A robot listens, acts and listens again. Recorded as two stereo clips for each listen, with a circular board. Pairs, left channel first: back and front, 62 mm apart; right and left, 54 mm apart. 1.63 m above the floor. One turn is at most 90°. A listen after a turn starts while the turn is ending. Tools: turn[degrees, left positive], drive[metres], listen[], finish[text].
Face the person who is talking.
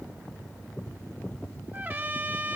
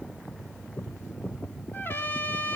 Action: listen[]
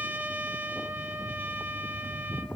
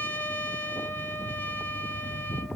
Action: listen[]
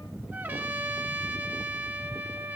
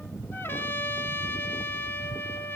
Action: finish[I can't make out anyone speaking, only a trumpet.]